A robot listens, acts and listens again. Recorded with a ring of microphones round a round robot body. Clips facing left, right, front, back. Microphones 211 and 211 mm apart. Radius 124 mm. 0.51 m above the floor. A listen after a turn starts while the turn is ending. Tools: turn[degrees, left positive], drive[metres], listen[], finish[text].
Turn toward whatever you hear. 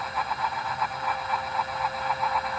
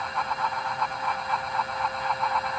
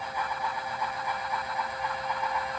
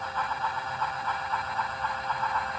Action: listen[]
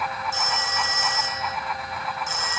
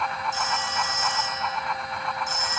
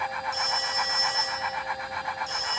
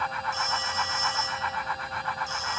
Thought: The phone ringing: 75° left.
Action: turn[75]
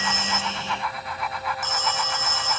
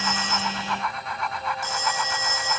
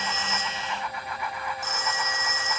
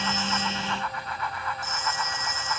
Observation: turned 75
Thought: The phone ringing is now 15° right.
Action: turn[-15]
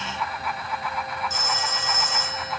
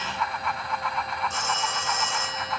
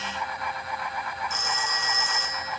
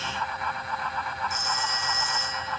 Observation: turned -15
Action: finish[Found it: a phone ringing, straight ahead.]